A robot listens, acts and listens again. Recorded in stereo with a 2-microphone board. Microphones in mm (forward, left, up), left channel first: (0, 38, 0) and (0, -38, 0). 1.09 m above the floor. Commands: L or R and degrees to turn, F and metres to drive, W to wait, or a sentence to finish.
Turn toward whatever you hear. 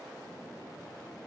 W
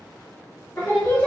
L30
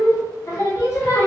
L30
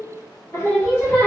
L30
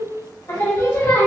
L40
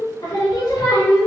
L115
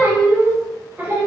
R30
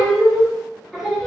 Found it: singing, straight ahead, 1 to 2 m away.